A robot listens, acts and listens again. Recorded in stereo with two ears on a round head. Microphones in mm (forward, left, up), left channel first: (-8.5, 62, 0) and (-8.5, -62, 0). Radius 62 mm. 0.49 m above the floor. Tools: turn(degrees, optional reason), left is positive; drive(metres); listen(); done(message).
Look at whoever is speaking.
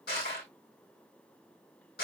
listen()
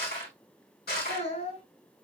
turn(degrees=55, reason="The child speaking: about 55° left or 125° left.")
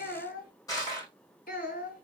turn(degrees=70, reason="So it is at 70° left.")
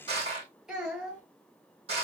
done("Facing the child speaking.")